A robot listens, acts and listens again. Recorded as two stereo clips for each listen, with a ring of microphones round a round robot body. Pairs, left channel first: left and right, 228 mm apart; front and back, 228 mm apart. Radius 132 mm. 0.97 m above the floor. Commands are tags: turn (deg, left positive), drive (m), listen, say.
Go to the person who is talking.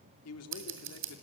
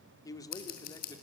<turn deg="75"/>
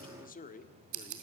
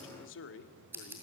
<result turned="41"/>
<turn deg="35"/>
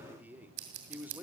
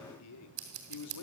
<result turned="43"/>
<turn deg="-10"/>
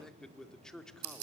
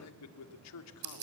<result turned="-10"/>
<drive m="1.0"/>
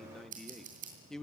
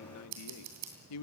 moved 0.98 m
<drive m="1.0"/>
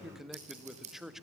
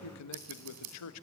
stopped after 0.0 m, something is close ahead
<say>Arrived at the man speaking, straight ahead.</say>